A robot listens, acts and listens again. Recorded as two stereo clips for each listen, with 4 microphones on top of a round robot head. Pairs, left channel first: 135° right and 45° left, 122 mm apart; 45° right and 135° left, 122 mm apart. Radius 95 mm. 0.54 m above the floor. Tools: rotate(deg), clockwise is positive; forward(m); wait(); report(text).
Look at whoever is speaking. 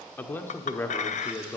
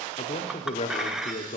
rotate(65)
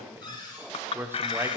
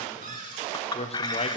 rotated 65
rotate(25)
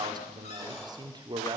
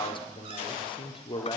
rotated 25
report("Facing the man speaking.")